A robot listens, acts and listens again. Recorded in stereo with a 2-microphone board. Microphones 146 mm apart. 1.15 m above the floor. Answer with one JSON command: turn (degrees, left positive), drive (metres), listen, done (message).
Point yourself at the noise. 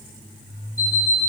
{"turn": 70}
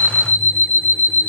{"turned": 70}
{"turn": 10}
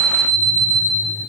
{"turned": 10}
{"done": "Facing the alarm clock."}